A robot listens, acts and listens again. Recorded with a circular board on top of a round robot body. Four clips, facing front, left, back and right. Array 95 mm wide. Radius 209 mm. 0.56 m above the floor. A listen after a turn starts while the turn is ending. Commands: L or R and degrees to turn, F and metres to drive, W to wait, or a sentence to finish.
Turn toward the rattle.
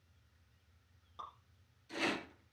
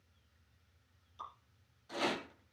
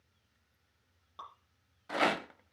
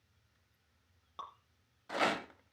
R155
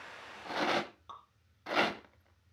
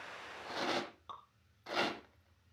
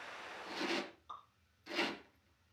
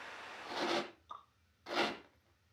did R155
Facing the rattle, 1 to 2 m away.